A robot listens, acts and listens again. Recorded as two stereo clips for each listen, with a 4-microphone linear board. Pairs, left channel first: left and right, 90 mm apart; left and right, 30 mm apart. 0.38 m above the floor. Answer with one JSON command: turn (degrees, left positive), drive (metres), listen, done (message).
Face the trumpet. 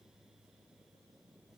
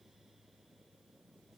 {"listen": true}
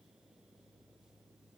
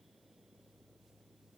{"listen": true}
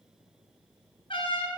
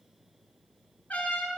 {"turn": 75}
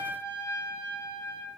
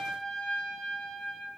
{"turn": 30}
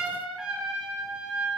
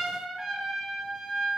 {"turn": -10}
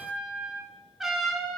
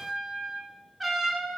{"done": "Found it: a trumpet, straight ahead."}